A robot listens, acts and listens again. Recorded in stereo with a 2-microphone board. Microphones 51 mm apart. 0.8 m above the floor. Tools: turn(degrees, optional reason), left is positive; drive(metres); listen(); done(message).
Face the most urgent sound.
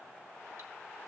listen()
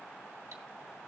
listen()
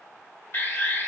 turn(degrees=55, reason="The alarm: about 55° left or 125° left.")
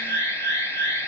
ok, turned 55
turn(degrees=70, reason="So it is at 70° left.")
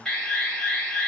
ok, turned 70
turn(degrees=15, reason="The alarm is now 15° left.")
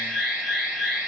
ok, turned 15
done("Found it: an alarm, straight ahead.")